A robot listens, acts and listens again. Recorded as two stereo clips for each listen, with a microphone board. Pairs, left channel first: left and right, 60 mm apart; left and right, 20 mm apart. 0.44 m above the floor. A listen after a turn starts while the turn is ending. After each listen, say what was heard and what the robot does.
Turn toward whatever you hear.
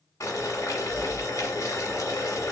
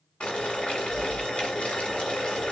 The boiling: about 65° left or 115° left. Turn 65° left.
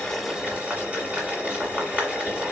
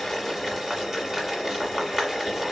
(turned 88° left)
So it is at 20° right. Turn 20° right.
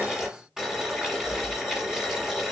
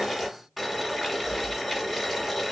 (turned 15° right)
The boiling is now 10° right. Turn 10° right.
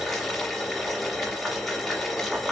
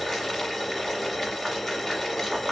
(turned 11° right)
Found it: boiling, straight ahead.